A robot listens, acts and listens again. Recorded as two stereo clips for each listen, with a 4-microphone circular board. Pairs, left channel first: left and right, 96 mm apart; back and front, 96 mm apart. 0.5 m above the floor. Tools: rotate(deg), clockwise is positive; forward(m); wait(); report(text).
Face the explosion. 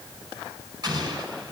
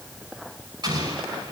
rotate(40)
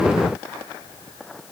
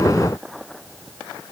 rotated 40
report("I heard an explosion from this way, but can't make it out now.")